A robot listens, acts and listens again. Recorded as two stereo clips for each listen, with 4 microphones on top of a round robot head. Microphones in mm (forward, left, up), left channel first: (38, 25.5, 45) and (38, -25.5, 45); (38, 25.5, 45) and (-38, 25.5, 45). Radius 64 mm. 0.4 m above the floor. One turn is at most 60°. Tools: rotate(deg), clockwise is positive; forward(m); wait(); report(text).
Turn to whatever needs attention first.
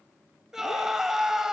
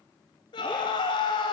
rotate(10)
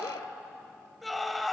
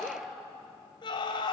report("Found it: a scream, straight ahead, 2 to 4 m away.")